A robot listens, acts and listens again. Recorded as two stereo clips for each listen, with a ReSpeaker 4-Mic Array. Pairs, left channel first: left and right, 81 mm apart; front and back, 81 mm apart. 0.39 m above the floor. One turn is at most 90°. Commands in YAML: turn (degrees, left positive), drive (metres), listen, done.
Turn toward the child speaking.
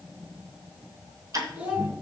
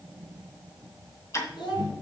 turn: -15
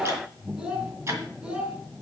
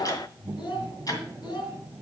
turn: -15
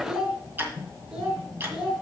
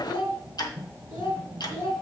done: "Found it: a child speaking, straight ahead."